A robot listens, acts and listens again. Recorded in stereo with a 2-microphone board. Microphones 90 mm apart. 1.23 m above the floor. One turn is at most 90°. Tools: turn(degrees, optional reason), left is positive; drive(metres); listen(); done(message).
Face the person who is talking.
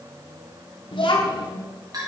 turn(degrees=70, reason="The child speaking: about 70° left or 110° left.")
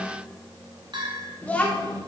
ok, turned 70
turn(degrees=15, reason="So it is at 15° left.")
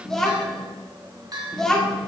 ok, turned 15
done("Found it: a child speaking, straight ahead.")